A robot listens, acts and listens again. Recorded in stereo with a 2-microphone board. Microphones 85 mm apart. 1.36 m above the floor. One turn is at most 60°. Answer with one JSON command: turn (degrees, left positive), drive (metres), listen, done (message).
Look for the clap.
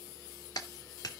{"turn": 45}
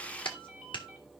{"turn": 60}
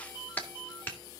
{"turn": 20}
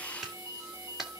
{"done": "Found it: a clap, straight ahead, 2 to 4 m away."}